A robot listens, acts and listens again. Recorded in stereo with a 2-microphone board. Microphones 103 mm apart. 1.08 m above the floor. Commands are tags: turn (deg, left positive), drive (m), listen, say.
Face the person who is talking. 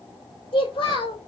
<turn deg="55"/>
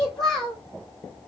<say>Facing the child speaking.</say>